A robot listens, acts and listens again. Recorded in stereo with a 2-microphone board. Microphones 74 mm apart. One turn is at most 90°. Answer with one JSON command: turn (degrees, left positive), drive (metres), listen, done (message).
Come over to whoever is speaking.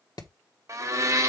{"listen": true}
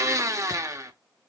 {"listen": true}
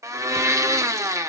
{"done": "I can't make out anyone speaking, only hammering and a blender."}